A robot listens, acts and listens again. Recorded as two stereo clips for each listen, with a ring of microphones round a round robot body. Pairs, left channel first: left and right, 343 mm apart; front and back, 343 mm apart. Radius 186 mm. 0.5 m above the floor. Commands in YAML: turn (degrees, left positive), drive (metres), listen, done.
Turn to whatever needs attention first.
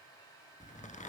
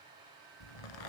listen: true
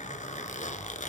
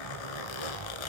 listen: true
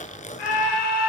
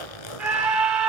turn: 95
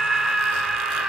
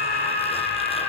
done: "Facing the scream, over 4 m away."